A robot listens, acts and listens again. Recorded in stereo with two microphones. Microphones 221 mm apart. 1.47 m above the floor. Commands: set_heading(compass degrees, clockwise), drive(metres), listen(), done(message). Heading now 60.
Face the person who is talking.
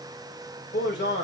set_heading(5)
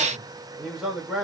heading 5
done("Facing the man speaking.")